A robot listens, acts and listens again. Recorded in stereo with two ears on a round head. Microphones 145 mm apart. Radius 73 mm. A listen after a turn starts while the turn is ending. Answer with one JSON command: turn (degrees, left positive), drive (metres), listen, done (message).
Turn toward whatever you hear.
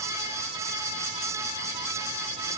{"listen": true}
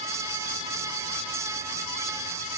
{"listen": true}
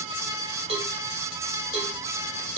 {"turn": -40}
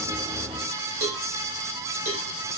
{"turn": -95}
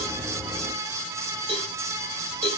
{"turn": -40}
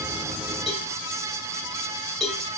{"done": "Found it: a cowbell, straight ahead, 1 to 2 m away."}